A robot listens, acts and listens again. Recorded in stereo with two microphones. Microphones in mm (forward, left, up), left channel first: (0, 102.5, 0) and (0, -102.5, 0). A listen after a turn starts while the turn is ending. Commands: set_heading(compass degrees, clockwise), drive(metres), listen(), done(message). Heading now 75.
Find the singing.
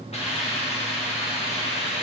listen()
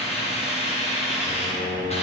set_heading(50)
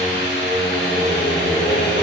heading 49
done("Facing the singing.")